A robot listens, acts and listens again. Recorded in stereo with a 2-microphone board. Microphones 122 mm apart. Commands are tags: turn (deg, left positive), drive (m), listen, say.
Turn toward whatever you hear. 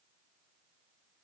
<listen/>
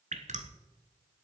<turn deg="-90"/>
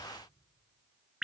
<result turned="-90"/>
<say>Found it: dripping, straight ahead, 1 to 2 m away.</say>